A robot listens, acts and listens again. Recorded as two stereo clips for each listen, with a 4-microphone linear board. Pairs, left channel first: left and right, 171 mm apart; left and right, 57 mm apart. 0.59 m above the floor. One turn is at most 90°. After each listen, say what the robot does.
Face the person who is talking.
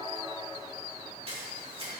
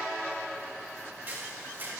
Keep listening.
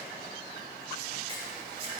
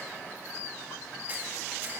Keep listening.
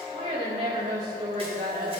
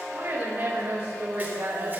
Turn 55° right.
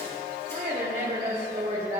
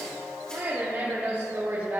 Turn 50° right.
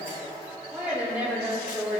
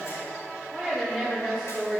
Turn 10° right.
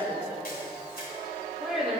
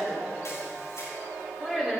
Found it: a woman speaking, straight ahead.